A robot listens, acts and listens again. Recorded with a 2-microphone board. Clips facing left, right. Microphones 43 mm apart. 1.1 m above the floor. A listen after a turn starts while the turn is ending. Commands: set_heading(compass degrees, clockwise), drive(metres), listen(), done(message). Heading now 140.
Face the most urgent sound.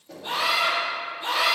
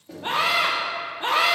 set_heading(185)
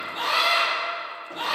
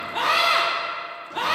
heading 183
set_heading(268)
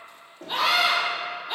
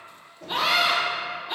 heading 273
done("Found it: a scream, straight ahead, 1 to 2 m away.")